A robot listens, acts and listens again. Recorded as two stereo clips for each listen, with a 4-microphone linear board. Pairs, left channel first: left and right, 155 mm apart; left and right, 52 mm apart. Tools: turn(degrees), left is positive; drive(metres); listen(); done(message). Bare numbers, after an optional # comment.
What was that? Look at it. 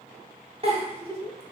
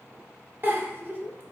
# The giggle: about 40° right or 140° right.
turn(-40)
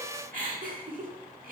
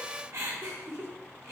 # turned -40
# So it is at 95° right.
turn(-95)
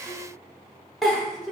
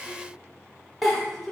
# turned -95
done("Found it: a giggle, straight ahead.")